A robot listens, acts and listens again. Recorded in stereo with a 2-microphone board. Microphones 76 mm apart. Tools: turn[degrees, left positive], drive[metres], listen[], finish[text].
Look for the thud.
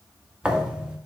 Action: turn[-30]
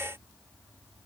Action: listen[]
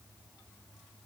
Action: finish[I heard a thud, but can't make it out now. It was about 20° left or 140° right.]